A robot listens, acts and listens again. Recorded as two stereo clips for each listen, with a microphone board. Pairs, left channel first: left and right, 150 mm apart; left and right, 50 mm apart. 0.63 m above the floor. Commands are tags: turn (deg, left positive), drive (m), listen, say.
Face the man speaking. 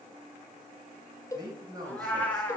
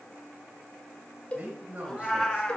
<turn deg="-25"/>
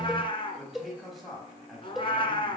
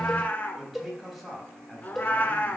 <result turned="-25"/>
<say>Found it: a man speaking, straight ahead, over 4 m away.</say>